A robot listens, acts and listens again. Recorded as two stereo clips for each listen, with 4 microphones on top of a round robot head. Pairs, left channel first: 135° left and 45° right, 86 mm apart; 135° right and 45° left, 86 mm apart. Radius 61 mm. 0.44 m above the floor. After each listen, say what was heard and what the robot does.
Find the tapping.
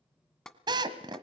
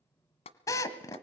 The tapping: 140° right. Turn 140° right.
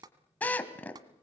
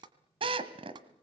Found it: tapping, straight ahead.